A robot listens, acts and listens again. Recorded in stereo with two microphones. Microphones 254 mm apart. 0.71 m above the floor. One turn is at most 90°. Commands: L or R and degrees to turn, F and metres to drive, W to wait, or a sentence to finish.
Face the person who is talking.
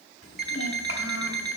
L60
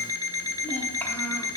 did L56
Facing the child speaking, 1 to 2 m away.